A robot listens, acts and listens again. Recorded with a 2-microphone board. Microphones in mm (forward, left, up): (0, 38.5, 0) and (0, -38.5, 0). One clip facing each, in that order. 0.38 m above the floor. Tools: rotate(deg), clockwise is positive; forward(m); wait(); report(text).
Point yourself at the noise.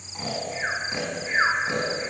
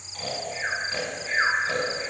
rotate(-20)
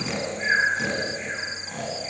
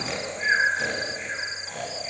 report("Found it: snoring, straight ahead.")